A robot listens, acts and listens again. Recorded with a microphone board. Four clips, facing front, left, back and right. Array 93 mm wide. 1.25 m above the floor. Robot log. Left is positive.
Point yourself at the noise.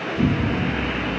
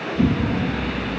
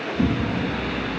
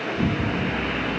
note: The explosion: 130° left.
cmd yaw +130
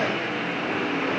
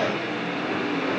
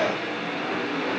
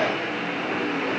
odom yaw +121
note: Nothing new. It was at 10° left.
cmd yaw +10
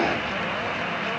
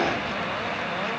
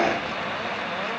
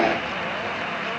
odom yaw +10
end: I heard an explosion from this way, but can't make it out now.